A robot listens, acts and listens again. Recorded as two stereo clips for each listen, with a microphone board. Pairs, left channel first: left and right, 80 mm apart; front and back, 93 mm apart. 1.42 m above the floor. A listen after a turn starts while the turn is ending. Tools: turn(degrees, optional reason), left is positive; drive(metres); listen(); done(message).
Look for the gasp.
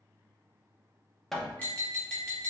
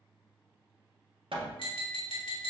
listen()
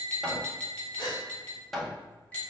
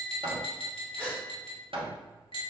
turn(degrees=75, reason="The gasp: 75° left.")
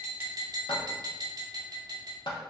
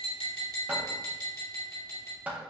done("I heard a gasp from this way, but can't make it out now.")